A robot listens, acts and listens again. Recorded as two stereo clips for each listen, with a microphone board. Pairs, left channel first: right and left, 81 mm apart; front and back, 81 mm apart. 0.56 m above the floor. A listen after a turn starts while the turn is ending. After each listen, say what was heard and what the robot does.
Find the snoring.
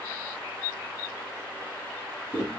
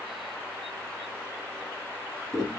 Keep listening.
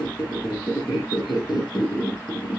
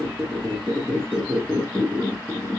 Keep listening.
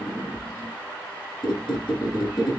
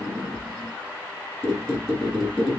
I can't make out snoring, only a squeak.